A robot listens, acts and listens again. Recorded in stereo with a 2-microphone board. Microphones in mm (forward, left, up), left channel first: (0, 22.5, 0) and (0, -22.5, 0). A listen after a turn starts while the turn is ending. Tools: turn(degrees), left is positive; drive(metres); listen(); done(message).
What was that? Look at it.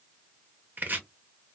turn(degrees=-45)
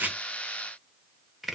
done("Facing the chopping.")